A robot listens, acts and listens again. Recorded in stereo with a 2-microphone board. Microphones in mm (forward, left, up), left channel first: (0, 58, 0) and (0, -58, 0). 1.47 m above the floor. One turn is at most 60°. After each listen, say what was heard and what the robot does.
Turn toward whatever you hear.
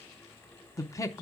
The man speaking: about 30° left or 150° left. Turn 30° left.
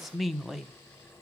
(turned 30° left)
Facing the man speaking.